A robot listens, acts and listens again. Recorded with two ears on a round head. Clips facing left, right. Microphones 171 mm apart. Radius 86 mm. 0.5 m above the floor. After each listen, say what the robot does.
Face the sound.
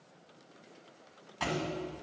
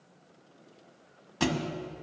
Turn 55° right.
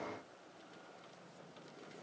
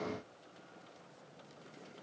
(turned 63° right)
Keep listening.
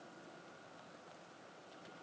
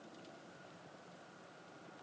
I heard a thud, but can't make it out now. It was about 10° left or 65° right.